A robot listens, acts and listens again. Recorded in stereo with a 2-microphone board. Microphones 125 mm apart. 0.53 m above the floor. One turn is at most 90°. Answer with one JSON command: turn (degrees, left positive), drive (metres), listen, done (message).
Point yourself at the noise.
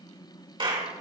{"turn": -40}
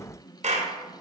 {"turn": -90}
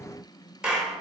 {"done": "Found it: a clap, straight ahead, 2 to 4 m away."}